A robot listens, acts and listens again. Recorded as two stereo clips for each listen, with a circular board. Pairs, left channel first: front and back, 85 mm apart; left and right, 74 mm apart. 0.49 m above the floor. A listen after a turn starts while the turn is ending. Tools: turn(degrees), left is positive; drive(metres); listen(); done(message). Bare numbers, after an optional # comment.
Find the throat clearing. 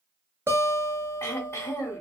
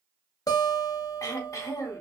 # The throat clearing: 55° left.
turn(55)
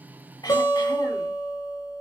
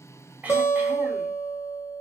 listen()
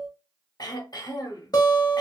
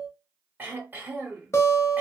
# The throat clearing is now 30° right.
turn(-30)
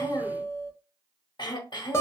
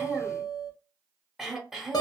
done("Facing the throat clearing, 1 to 2 m away.")